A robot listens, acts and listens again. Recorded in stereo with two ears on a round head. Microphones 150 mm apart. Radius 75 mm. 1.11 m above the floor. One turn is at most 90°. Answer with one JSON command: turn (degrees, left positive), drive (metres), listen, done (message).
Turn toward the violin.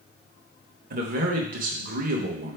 {"listen": true}
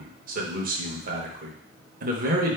{"listen": true}
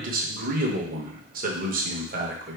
{"done": "I can't make out a violin to turn to."}